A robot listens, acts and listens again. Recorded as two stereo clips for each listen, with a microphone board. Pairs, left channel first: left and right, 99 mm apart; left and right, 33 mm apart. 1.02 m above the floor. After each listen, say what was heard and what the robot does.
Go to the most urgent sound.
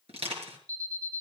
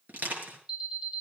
The alarm: about 35° right or 145° right. Turn 35° right.
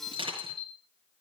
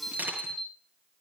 Drive 1.0 m forward.
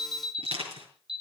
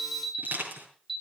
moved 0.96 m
Drive 1.0 m forward.
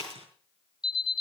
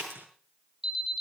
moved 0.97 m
The alarm is now 10° right. Turn 10° right.
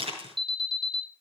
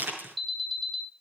Drive 1.0 m forward.
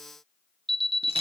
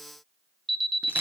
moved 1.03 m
Drive 1.0 m forward.
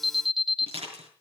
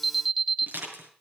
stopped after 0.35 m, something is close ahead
I am next to the alarm.